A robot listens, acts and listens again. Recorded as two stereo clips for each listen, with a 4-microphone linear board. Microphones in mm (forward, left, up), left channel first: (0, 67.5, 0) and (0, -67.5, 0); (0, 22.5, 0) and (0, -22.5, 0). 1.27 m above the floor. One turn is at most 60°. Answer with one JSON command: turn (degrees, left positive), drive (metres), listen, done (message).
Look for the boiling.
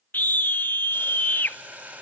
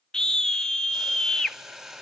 {"turn": -30}
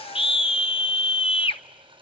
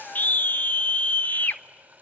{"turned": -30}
{"turn": -60}
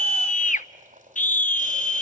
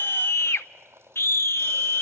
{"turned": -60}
{"turn": -60}
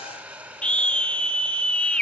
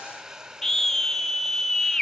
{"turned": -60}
{"turn": -10}
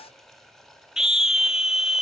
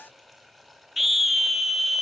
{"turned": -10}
{"done": "Found it: boiling, straight ahead, over 4 m away."}